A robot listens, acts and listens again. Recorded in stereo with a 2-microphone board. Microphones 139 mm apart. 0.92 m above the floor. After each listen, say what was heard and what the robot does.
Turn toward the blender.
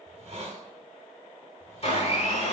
The blender: about 50° left or 130° left. Turn 50° left.
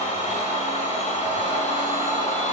So it is at 70° left. Turn 70° left.
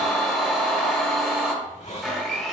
Found it: a blender, straight ahead.